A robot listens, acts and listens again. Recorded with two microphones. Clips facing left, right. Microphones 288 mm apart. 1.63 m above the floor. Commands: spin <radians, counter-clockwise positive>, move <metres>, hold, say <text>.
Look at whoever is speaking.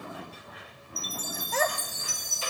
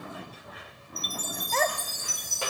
spin 0.52
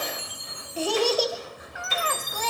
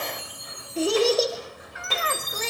spin -0.52
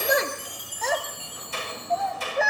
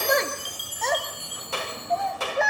say Found it: a child speaking, straight ahead.